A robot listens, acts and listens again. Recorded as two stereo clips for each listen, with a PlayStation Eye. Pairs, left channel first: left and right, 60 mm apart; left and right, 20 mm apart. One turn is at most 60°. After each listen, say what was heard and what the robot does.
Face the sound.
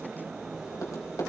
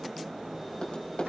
The tapping: about 60° left or 120° left. Turn 60° left.
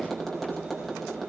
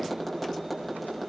Facing the tapping, over 4 m away.